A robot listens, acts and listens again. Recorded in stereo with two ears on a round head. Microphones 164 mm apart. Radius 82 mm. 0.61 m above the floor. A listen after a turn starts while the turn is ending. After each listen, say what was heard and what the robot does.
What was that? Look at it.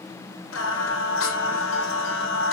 Turn 90° left.
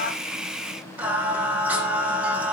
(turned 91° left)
So it is at 10° right. Turn 10° right.
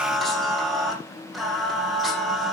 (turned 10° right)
Found it: singing, straight ahead, over 4 m away.